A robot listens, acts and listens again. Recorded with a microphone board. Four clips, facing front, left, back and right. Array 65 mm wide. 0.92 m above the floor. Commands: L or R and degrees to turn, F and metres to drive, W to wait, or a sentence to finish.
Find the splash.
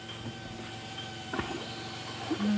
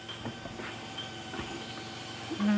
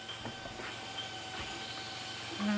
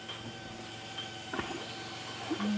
R25
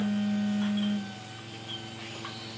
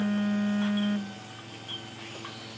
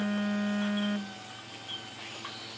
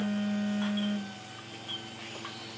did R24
I heard a splash from this way, but can't make it out now.